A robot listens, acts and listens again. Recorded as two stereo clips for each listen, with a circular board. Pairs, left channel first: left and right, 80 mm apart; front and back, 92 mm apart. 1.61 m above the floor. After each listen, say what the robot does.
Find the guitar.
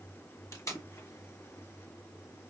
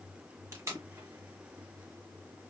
Keep listening.
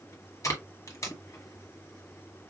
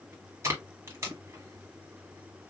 Keep listening.
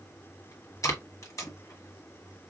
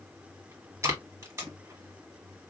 I can't make out a guitar to turn to.